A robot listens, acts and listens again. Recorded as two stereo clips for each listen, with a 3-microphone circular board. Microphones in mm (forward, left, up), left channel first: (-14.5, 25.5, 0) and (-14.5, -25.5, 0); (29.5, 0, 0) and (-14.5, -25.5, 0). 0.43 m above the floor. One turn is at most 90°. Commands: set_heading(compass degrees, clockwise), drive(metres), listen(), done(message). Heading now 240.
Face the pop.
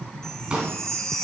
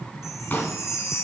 set_heading(260)
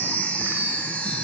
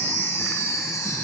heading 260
done("Facing where the pop came from. I can't hear it now.")